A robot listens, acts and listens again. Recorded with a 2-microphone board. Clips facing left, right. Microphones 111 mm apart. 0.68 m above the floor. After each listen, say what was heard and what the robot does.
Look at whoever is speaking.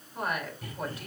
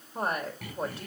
The woman speaking: about 30° right or 150° right. Turn 30° right.
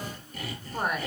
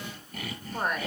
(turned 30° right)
Found it: a woman speaking, straight ahead, 2 to 4 m away.